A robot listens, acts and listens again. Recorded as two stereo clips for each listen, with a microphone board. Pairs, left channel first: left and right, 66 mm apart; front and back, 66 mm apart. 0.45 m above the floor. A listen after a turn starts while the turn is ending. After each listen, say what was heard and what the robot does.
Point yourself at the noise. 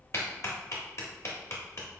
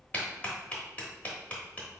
The clap: 60° left. Turn 60° left.
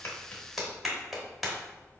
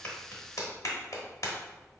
Found it: a clap, straight ahead.